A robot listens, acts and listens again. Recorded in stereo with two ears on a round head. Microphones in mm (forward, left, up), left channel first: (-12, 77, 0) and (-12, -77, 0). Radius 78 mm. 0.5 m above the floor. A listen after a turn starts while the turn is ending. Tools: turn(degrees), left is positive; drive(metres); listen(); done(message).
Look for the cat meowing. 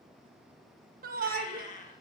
turn(degrees=45)
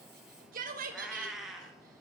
done("Found it: a cat meowing, straight ahead.")